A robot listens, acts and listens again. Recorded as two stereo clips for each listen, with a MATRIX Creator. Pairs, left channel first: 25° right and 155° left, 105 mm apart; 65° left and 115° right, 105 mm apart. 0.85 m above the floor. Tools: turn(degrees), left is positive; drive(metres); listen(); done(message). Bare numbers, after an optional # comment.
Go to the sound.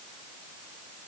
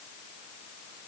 listen()
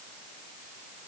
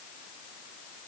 listen()
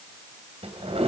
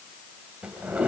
# The drawer: 170° left.
turn(170)
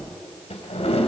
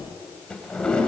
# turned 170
# The drawer is now 15° right.
turn(-15)
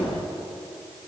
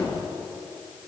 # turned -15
drive(1.0)
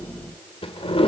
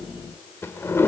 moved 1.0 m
drive(1.0)
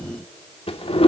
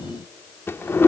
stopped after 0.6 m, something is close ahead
done("I am next to the drawer.")